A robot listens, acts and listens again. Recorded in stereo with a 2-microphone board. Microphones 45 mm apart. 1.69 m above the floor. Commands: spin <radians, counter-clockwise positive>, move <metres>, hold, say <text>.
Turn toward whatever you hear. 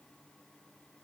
hold
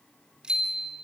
spin -0.35
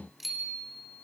say Found it: a bicycle bell, straight ahead.